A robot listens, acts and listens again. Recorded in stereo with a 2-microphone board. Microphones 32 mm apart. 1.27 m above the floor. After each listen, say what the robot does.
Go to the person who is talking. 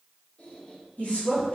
Turn 55° left.
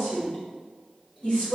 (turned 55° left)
Turn 65° left.
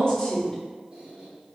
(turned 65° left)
Turn 35° left.
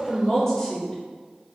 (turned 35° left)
Turn 15° left.
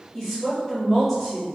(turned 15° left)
Drive 1.0 m forward.
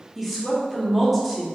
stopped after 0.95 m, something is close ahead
Arrived at the woman speaking, straight ahead.